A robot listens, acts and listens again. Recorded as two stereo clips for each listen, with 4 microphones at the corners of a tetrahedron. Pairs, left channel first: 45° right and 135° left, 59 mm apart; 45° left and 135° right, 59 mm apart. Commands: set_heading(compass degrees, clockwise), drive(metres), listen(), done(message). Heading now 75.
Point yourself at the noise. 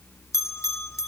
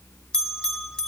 set_heading(105)
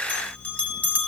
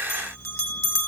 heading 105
set_heading(90)
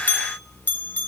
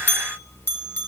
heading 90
done("Found it: a bell, straight ahead.")